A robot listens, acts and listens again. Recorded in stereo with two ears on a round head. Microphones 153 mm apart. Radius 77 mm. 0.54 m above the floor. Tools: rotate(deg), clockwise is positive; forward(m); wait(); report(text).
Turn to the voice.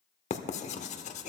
wait()
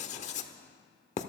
wait()
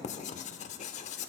report("I can't make out anyone speaking, only writing.")